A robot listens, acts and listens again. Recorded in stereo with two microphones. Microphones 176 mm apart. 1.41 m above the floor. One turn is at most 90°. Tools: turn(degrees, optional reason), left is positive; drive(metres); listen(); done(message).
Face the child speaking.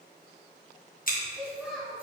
turn(degrees=30)
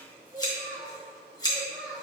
turn(degrees=-30)
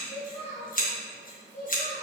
turn(degrees=45, reason="So it is at 45° left.")
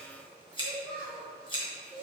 turn(degrees=25, reason="The child speaking is now 25° left.")
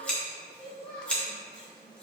done("Facing the child speaking.")